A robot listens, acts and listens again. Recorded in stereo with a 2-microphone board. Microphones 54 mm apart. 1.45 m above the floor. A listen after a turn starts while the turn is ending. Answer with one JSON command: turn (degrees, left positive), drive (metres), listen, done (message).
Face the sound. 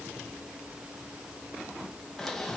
{"turn": 30}
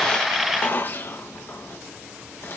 {"turn": 140}
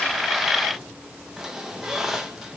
{"turn": -10}
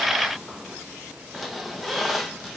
{"done": "Found it: a squeak, straight ahead."}